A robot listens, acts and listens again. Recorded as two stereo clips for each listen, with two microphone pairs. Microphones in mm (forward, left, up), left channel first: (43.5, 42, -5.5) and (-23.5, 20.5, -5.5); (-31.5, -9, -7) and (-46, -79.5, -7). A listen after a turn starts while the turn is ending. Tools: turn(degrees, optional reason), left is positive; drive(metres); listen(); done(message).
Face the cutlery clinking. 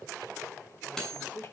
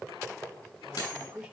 turn(degrees=100, reason="The cutlery clinking: 100° left.")
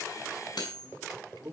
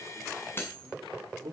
turn(degrees=20, reason="The cutlery clinking is now 20° left.")
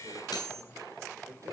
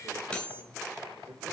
done("Found it: cutlery clinking, straight ahead.")